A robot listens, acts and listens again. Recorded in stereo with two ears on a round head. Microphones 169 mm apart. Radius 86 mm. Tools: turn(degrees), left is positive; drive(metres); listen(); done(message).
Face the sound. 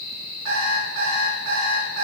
turn(degrees=-90)
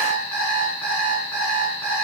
turn(degrees=10)
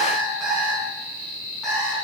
done("Found it: an alarm clock, straight ahead.")